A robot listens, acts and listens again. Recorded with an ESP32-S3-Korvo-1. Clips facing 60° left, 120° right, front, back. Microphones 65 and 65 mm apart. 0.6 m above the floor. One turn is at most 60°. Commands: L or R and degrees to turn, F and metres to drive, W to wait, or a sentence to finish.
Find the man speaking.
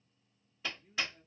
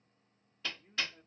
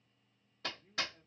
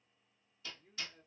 R60
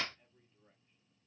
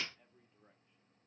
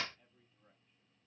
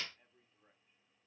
R60
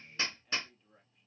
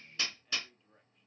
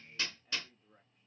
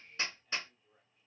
R30
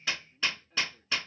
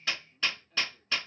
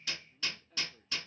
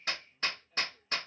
Facing the man speaking, 1 to 2 m away.